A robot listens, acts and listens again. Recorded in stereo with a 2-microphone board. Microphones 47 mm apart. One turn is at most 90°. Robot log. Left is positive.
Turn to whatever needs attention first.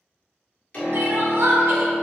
note: The crying: about 70° right or 110° right.
cmd yaw -70
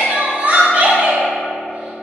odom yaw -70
note: So it is at 35° right.
cmd yaw -35
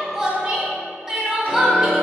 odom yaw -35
note: The crying is now 10° right.
cmd yaw -10
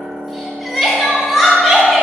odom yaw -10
end: Facing the crying, 1 to 2 m away.